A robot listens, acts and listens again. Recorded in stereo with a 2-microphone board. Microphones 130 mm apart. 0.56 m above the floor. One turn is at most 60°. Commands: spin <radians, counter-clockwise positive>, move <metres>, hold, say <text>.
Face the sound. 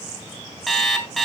spin 0.52
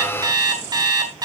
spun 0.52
spin -0.61
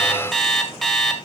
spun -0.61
say Facing the alarm clock.